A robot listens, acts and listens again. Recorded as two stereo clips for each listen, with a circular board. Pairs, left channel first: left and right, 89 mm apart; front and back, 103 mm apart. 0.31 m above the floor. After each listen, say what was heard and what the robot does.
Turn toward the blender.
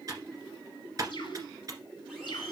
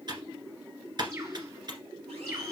Keep listening.
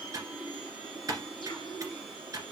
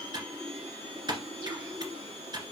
The blender: 175° left. Turn 175° left.
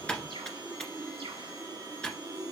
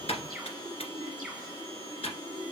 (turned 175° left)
The blender is now 35° right. Turn 35° right.
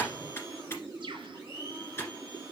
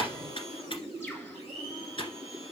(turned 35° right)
The blender is now 15° right. Turn 15° right.
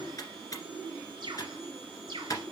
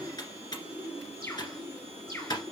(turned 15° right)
Keep listening.
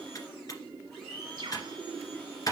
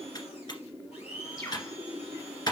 Found it: a blender, straight ahead.